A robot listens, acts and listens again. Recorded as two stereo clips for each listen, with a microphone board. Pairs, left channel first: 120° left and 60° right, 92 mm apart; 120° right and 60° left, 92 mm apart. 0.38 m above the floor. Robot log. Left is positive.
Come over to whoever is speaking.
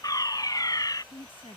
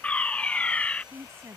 note: The woman speaking: 120° left.
cmd yaw +120
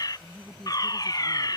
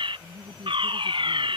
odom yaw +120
note: The woman speaking is now 35° left.
cmd yaw +35
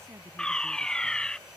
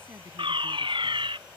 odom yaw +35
cmd idle
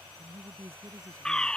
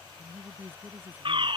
cmd fwd 1.0
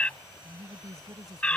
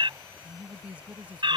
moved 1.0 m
note: The woman speaking is now 15° right.
cmd yaw -15
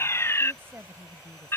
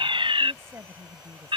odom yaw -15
cmd fwd 1.0
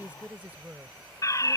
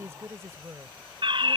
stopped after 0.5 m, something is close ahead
note: The woman speaking is now 10° left.
cmd yaw +10
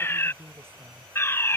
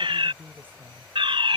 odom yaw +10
end: I am next to the woman speaking.